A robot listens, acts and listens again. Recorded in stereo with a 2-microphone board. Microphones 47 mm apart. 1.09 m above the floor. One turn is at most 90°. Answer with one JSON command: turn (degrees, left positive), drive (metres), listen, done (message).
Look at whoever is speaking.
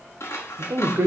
{"turn": -70}
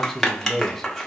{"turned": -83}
{"done": "Found it: a man speaking, straight ahead, under 1 m away."}